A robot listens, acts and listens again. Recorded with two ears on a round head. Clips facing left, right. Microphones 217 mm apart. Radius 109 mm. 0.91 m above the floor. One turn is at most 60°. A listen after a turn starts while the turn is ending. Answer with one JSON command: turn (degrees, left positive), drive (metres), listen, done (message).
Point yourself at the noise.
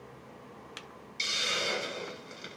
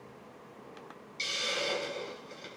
{"turn": 30}
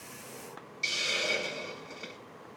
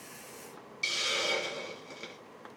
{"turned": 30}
{"turn": -20}
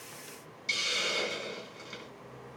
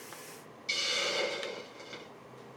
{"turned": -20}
{"done": "Facing the hiss, 1 to 2 m away."}